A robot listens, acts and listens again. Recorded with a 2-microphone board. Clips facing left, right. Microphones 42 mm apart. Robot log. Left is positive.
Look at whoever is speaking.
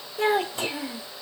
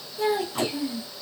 note: The child speaking: about 55° left or 125° left.
cmd yaw +55
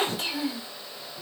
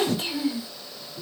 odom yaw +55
end: Found it: a child speaking, straight ahead.